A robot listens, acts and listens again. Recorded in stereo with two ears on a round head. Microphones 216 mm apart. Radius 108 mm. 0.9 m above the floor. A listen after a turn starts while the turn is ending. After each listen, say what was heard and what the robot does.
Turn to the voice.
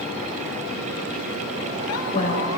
The woman speaking: about 35° left or 145° left. Turn 35° left.
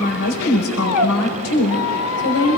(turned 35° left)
So it is at 110° left. Turn 110° left.
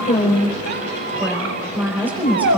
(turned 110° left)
Facing the woman speaking.